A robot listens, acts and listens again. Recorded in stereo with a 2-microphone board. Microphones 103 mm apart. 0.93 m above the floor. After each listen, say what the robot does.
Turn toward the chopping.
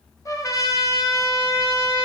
Keep listening.
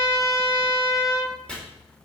Turn 30° left.
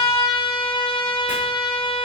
Keep listening.
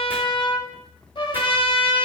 Keep listening.
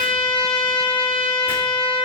I heard chopping, but can't make it out now. It was about 20° right or 140° left.